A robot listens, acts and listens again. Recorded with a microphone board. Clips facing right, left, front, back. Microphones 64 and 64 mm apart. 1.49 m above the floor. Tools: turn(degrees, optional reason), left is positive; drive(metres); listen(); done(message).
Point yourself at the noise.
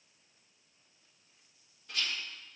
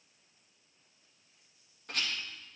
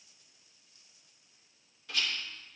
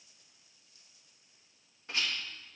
turn(degrees=125, reason="The rattle: 125° left.")
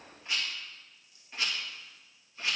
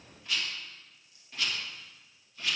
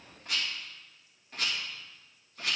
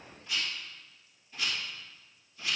turn(degrees=-25, reason="The rattle is now 25° right.")
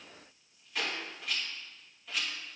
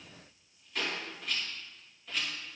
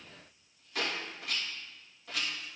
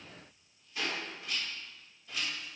done("Facing the rattle.")